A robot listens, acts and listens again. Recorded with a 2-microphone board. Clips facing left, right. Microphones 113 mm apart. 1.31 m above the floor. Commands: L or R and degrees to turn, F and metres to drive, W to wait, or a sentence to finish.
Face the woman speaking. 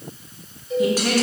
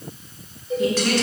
L30
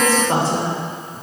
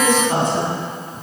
L150
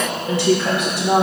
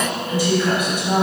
L75
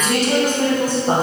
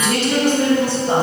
L45
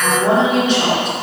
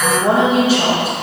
Facing the woman speaking.